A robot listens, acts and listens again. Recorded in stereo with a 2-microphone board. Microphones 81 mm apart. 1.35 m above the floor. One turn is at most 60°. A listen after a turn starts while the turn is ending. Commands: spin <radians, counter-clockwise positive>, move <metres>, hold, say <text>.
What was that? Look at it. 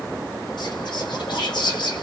spin 1.05
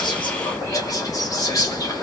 spin 0.79
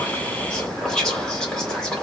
spin 0.17
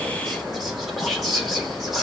say Facing the whispering.